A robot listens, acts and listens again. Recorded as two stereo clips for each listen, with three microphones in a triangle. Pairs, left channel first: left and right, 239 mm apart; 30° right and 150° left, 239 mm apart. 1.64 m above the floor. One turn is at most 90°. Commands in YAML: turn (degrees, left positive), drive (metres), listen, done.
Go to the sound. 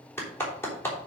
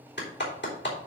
turn: 10
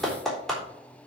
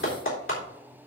drive: 1.0
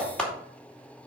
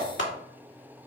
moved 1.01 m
drive: 1.0
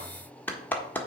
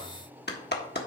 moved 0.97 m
turn: 10
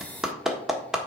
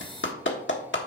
drive: 1.0
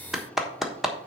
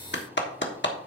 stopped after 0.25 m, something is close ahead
done: "I am next to the clap."